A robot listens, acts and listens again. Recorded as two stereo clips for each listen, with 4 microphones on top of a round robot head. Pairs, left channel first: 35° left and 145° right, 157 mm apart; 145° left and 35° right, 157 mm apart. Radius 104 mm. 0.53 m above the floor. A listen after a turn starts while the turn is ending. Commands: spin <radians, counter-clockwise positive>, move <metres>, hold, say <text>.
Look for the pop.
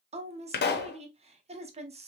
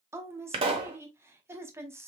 spin 0.44
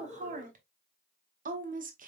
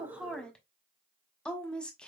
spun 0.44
say I heard a pop from this way, but can't make it out now.